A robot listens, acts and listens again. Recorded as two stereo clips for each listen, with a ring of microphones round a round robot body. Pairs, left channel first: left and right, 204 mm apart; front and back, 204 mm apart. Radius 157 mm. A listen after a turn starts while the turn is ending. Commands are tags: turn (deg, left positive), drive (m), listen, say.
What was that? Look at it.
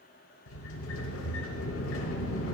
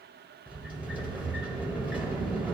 <turn deg="95"/>
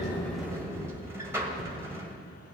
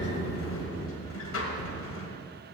<turn deg="-10"/>
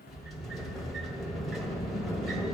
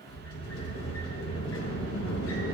<say>Facing the sliding door, 1 to 2 m away.</say>